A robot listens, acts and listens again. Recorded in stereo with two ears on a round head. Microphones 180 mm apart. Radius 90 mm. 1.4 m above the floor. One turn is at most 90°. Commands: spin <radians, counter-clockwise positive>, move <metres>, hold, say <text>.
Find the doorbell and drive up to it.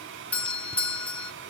spin 0.52
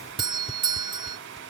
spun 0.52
spin -0.44
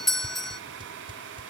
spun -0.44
move 1.0
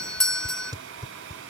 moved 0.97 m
move 1.0
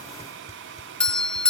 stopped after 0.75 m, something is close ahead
say I am next to the doorbell.